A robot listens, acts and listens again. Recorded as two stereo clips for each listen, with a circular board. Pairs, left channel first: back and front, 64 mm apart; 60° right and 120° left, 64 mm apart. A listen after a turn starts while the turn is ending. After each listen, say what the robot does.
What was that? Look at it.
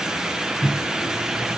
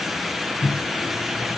Turn 90° right.
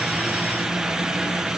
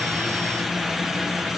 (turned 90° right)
Keep listening.
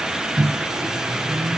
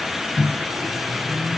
Found it: a microwave, straight ahead.